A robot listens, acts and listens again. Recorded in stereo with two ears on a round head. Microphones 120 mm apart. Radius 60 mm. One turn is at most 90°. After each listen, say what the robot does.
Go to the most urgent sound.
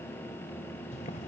Keep listening.
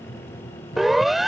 Turn 30° left.
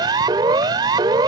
Turn 30° right.
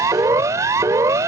Turn 25° right.
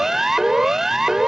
Drive 1.0 m forward.
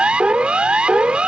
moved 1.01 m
Turn 10° right.
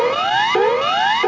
Drive 1.0 m forward.
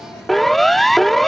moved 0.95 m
Drive 1.0 m forward.
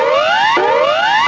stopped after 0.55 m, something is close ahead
Arrived at the siren, straight ahead.